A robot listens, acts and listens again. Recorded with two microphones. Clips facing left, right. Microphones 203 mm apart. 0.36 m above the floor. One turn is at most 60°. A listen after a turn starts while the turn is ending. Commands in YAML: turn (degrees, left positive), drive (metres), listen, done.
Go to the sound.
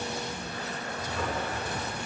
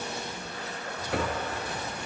turn: -60
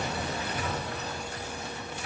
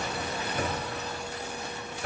turn: -50
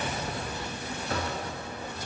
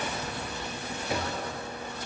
turn: -15
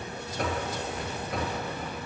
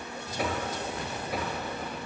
drive: 1.0
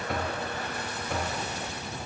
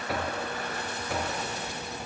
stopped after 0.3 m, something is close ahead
done: "Something is in my way. I am facing the knocking but have not reached it."